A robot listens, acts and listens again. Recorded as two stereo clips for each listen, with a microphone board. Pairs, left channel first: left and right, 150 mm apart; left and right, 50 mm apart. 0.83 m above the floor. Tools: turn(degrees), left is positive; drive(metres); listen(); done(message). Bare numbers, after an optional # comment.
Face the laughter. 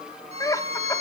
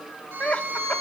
# The laughter: about 20° left or 160° left.
turn(20)
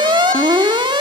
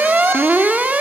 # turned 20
listen()
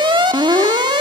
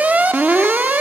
listen()
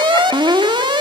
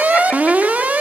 done("I heard laughter, but can't make it out now. It was about straight ahead or 140° left.")